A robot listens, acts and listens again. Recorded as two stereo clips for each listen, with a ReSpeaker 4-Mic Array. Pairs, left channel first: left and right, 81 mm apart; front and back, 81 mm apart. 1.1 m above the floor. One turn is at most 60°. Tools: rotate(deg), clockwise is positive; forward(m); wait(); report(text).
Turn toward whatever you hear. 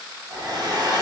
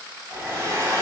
rotate(60)
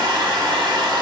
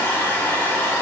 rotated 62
rotate(60)
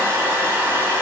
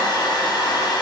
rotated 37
rotate(30)
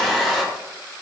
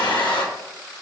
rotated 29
report("Facing the hair dryer, under 1 m away.")